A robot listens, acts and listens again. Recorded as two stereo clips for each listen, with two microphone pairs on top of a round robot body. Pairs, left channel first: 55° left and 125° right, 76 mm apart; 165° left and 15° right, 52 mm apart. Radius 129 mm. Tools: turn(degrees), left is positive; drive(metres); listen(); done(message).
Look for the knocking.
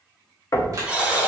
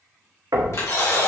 turn(degrees=10)
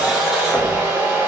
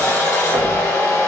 listen()
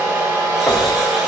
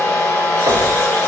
listen()
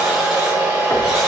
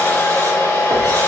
done("I heard knocking from this way, but can't make it out now.")